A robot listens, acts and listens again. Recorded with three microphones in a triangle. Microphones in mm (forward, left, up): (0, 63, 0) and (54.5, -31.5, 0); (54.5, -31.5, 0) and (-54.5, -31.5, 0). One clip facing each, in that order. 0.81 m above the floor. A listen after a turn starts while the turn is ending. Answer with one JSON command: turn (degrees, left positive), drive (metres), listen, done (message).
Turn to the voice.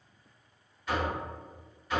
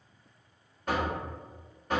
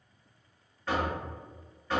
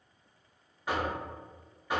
{"listen": true}
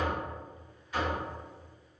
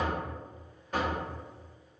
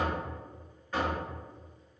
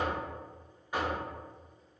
{"listen": true}
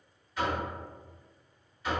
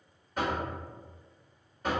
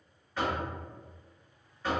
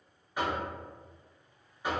{"done": "I can't make out anyone speaking to turn to."}